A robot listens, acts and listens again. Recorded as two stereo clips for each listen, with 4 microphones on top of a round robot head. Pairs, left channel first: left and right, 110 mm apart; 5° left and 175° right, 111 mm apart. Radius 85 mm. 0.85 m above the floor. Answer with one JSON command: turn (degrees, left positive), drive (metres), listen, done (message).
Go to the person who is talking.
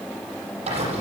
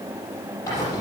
{"listen": true}
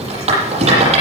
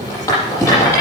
{"listen": true}
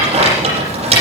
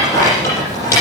{"done": "I can't make out anyone speaking, only a rattle."}